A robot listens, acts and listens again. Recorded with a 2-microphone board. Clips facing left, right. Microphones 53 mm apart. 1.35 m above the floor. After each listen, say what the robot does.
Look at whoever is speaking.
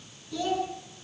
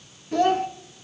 Turn 50° right.
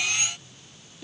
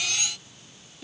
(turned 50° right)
Found it: a child speaking, straight ahead, 1 to 2 m away.